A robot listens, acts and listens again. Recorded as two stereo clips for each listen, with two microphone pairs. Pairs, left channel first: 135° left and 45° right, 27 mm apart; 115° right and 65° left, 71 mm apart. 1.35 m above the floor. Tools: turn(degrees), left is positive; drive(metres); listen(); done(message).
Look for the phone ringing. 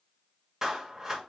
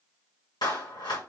listen()
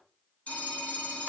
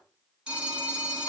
turn(degrees=140)
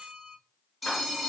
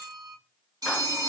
turn(degrees=45)
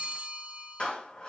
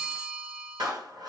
turn(degrees=-15)
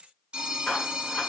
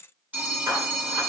done("Facing the phone ringing.")